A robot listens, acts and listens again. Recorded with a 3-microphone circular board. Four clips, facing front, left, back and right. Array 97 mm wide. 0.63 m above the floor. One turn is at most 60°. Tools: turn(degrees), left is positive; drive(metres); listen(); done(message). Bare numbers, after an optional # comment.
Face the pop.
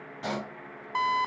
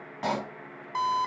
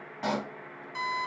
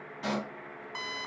# The pop: 115° left.
turn(60)
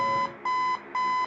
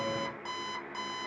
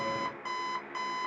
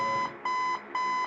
# Nothing new. It was at 55° left.
turn(55)
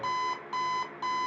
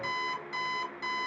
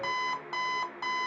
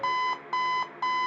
done("I heard a pop from this way, but can't make it out now.")